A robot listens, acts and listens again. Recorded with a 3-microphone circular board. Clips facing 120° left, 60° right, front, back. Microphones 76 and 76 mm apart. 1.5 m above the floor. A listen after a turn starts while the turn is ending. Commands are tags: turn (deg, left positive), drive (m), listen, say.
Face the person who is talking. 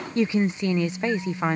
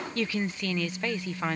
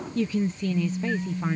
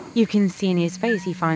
<turn deg="-170"/>
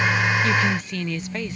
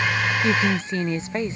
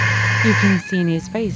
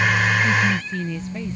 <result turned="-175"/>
<say>Facing the woman speaking.</say>